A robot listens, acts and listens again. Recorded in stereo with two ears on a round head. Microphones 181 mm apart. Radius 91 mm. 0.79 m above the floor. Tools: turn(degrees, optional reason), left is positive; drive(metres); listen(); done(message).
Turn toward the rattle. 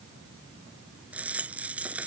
turn(degrees=-30)
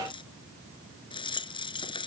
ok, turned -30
turn(degrees=25, reason="So it is at 25° left.")
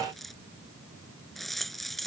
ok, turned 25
done("Facing the rattle.")